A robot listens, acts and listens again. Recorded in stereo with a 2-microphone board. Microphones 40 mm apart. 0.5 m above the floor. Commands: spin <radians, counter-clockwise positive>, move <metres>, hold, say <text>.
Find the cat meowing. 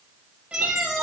spin -0.52
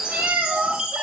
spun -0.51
spin -1.92
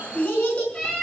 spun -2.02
spin 0.26
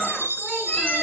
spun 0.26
hold
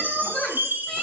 say Found it: a cat meowing, straight ahead, over 4 m away.